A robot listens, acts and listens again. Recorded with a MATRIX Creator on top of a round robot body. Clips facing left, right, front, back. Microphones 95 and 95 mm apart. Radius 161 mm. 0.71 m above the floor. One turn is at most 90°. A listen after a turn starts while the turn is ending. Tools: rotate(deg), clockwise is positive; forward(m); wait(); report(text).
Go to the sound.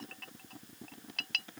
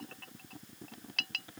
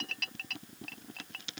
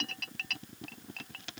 wait()
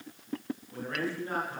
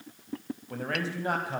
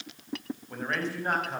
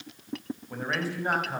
rotate(90)
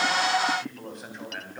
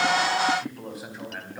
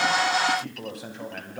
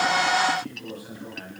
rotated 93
forward(1.0)
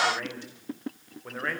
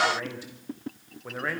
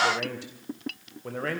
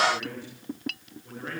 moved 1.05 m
forward(1.0)
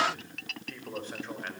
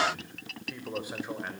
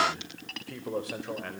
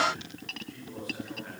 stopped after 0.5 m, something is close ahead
rotate(10)
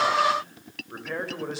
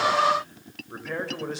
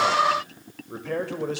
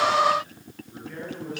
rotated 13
report("Blocked. The man speaking is further on, straight ahead.")